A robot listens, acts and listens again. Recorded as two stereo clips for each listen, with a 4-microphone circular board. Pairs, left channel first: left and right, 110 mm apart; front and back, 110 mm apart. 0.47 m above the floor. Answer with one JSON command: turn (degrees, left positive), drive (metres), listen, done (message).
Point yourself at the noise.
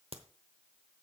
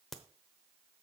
{"turn": -85}
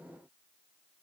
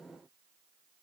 {"done": "I heard a crack from this way, but can't make it out now."}